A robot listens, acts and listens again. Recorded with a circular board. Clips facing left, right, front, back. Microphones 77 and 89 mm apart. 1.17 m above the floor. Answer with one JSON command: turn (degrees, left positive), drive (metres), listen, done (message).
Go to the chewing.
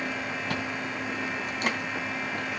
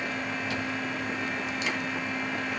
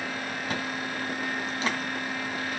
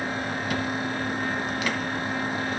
{"turn": 55}
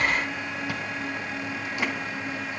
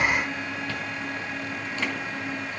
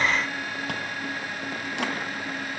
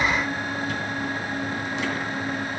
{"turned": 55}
{"listen": true}
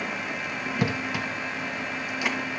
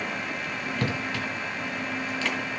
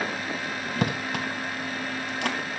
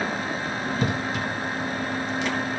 {"turn": 15}
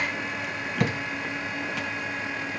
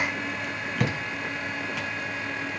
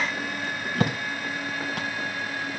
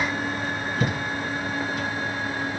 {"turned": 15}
{"drive": 1.0}
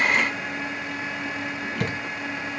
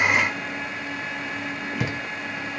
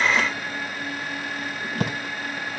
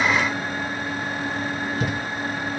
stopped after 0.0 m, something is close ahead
{"done": "Blocked. The chewing is further on, straight ahead."}